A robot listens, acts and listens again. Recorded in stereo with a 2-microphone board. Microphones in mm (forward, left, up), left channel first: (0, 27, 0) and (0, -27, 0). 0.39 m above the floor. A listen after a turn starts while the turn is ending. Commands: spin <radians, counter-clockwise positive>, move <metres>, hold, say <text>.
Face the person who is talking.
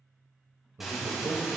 spin -1.05
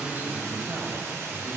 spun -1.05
spin -0.44
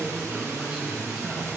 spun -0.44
spin -0.17
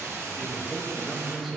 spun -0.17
say Facing the man speaking.